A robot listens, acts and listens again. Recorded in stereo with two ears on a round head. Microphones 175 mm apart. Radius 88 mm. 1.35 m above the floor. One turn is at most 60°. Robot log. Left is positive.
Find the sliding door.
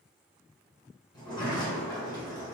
note: The sliding door: about 20° left or 160° left.
cmd yaw +20
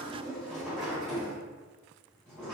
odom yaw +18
end: Found it: a sliding door, straight ahead, 1 to 2 m away.